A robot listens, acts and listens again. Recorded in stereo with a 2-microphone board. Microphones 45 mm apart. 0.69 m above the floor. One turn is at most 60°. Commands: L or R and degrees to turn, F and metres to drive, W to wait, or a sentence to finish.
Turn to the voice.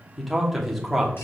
L30
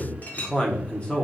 L60
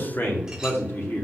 L60
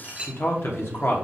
L60
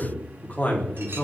L40
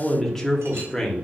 L10
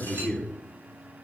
Facing the man speaking.